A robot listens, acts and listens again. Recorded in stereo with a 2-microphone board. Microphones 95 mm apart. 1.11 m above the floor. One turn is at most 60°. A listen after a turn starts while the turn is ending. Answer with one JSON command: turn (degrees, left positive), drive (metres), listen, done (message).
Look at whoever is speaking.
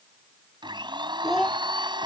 {"turn": 30}
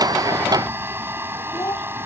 {"turn": 60}
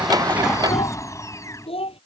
{"turn": 60}
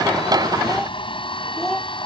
{"done": "Facing the child speaking."}